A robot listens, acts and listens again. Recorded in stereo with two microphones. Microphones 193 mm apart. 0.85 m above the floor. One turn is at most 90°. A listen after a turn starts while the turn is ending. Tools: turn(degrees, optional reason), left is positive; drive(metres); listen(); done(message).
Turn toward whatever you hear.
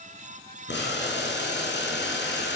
turn(degrees=90)
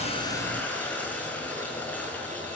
turn(degrees=10, reason="So it is at 10° left.")
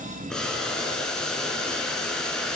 done("Found it: boiling, straight ahead.")